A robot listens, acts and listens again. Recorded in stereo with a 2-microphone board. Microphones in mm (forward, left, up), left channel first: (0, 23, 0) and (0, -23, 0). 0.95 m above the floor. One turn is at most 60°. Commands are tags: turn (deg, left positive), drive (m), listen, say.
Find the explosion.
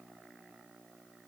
<listen/>
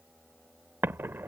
<turn deg="-60"/>
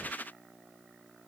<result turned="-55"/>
<turn deg="-40"/>
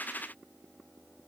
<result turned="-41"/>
<say>Facing where the explosion came from. I can't hear it now.</say>